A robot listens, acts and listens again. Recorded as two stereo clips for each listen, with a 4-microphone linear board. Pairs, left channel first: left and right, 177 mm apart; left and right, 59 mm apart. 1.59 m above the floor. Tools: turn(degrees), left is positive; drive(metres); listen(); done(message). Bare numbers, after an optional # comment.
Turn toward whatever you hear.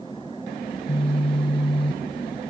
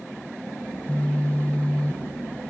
# The phone buzzing: about 30° left or 150° left.
turn(30)
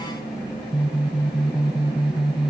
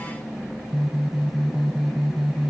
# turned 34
done("Found it: a phone buzzing, straight ahead, under 1 m away.")